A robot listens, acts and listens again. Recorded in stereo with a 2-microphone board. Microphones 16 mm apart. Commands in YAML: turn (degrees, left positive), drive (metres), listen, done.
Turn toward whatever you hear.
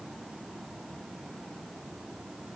listen: true
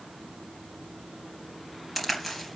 turn: 30
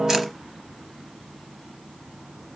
listen: true
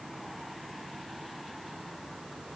done: "I heard a crack, but can't make it out now. It was about 25° right or 145° left."